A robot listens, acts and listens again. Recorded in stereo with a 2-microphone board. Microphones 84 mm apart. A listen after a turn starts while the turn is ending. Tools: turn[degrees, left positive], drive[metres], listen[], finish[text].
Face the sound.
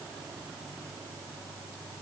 Action: listen[]
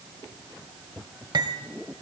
Thought: The cutlery clinking: about 60° right or 120° right.
Action: turn[-60]
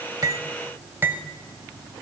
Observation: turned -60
Thought: So it is at 30° right.
Action: turn[-30]
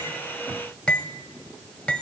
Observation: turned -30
Thought: The cutlery clinking is now 15° left.
Action: turn[15]
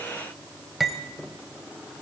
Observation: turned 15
Action: finish[Facing the cutlery clinking, 1 to 2 m away.]